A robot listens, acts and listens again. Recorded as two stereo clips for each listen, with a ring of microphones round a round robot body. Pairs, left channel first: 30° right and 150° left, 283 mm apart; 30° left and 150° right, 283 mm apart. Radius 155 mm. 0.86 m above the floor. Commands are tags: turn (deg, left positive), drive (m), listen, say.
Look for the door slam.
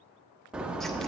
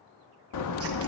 <turn deg="65"/>
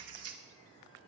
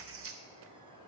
<say>Facing where the door slam came from. I can't hear it now.</say>